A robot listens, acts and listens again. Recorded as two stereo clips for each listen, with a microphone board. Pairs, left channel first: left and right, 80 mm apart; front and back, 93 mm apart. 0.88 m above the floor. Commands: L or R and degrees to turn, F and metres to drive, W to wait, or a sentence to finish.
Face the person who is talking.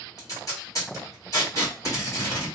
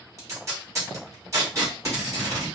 W
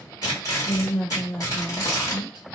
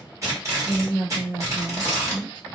L80
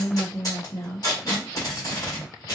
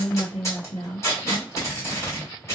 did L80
L10
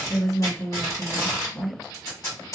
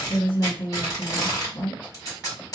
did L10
Found it: a woman speaking, straight ahead, 1 to 2 m away.